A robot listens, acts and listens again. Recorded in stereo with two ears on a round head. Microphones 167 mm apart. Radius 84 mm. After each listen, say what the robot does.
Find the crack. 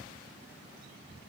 Keep listening.
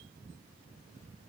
Keep listening.
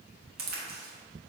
Turn 55° right.
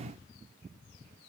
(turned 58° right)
Keep listening.
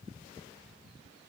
I heard a crack, but can't make it out now. It was about straight ahead or 65° right.